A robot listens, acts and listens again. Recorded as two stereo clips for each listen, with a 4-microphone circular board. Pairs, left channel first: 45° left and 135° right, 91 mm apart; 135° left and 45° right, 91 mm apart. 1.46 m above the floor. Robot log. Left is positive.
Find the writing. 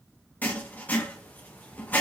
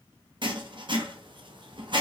note: The writing: 25° right.
cmd yaw -25
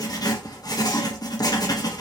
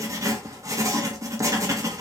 end: Facing the writing, under 1 m away.